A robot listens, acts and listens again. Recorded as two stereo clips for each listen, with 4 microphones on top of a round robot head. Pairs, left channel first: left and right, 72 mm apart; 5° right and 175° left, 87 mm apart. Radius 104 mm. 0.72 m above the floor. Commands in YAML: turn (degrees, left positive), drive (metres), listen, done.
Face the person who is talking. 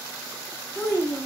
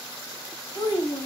turn: 35
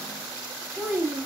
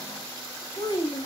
turn: -10
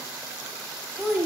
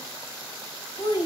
done: "Found it: a child speaking, straight ahead, 1 to 2 m away."